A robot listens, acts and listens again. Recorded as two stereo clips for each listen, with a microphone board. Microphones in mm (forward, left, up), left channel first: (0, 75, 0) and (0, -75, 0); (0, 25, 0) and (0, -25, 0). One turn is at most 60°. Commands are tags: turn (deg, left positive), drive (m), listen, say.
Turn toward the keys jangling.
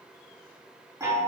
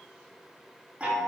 <listen/>
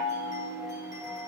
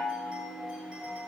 <listen/>
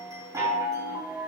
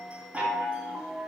<say>I can't make out keys jangling to turn to.</say>